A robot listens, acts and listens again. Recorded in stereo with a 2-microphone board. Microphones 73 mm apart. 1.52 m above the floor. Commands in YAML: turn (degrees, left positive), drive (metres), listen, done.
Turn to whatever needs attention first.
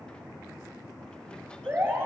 turn: -30
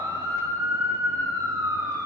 turn: -120
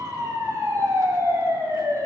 turn: -45
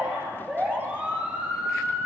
turn: -15
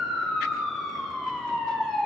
done: "Found it: a siren, straight ahead."